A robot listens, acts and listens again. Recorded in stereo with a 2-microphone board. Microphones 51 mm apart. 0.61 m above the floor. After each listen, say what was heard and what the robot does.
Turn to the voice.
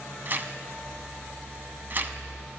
Keep listening.
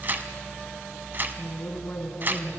The woman speaking: about 45° left or 135° left. Turn 45° left.
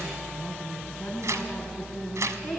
Found it: a woman speaking, straight ahead.